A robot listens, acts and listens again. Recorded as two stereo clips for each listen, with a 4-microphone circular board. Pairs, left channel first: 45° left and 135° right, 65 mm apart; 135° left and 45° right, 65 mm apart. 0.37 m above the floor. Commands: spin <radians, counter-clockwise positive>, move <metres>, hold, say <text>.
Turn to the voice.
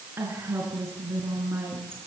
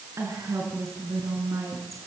spin -1.40
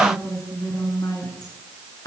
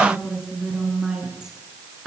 spin 0.61
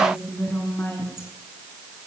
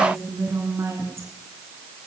say Facing the woman speaking.